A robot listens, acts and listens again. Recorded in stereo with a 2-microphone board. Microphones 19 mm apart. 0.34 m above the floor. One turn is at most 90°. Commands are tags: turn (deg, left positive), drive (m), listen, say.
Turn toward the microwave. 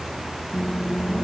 <turn deg="30"/>
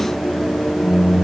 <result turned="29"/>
<turn deg="90"/>
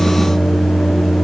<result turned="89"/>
<turn deg="50"/>
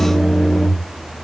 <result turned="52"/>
<say>Found it: a microwave, straight ahead.</say>